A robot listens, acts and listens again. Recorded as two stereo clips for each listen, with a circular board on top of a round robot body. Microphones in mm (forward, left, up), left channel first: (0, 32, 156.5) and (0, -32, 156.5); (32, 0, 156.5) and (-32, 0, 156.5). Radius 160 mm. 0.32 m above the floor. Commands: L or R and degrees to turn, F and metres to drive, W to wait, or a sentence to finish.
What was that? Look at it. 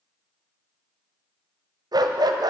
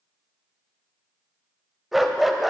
R95
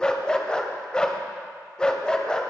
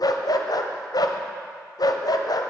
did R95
L15
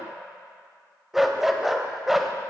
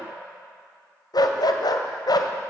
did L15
Facing the dog barking.